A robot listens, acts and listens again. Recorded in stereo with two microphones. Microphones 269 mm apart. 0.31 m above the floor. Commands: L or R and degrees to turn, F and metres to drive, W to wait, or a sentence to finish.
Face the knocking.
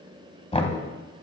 L20
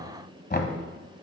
L135
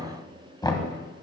L15
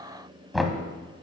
Found it: knocking, straight ahead, 1 to 2 m away.